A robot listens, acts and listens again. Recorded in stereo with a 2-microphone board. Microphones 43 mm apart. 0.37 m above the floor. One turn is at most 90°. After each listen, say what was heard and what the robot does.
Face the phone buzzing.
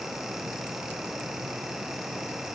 Keep listening.
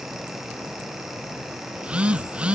The phone buzzing: about 30° right or 150° right. Turn 30° right.
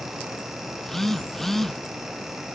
Found it: a phone buzzing, straight ahead.